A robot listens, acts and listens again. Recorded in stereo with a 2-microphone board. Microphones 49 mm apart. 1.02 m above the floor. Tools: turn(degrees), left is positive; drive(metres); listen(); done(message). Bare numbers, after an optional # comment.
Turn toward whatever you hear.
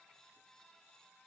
listen()
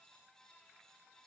listen()
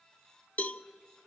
# The cowbell: about 30° left or 150° left.
turn(30)
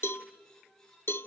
# So it is at 115° left.
turn(115)
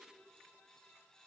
# The cowbell is now 10° left.
turn(10)
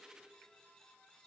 listen()
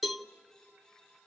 done("Found it: a cowbell, straight ahead.")